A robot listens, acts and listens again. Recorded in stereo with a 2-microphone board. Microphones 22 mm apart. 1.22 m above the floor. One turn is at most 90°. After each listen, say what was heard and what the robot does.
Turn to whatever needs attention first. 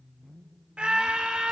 The scream: about 45° right or 135° right. Turn 45° right.
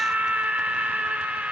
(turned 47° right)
So it is at 90° right. Turn 90° right.
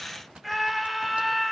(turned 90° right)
Facing the scream, 2 to 4 m away.